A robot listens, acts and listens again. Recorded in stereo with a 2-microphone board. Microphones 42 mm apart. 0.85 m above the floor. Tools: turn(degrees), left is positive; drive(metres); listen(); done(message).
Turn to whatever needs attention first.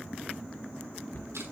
listen()
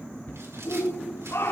turn(degrees=75)
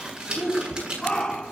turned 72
turn(degrees=15)
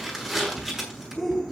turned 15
done("Facing the shout, 2 to 4 m away.")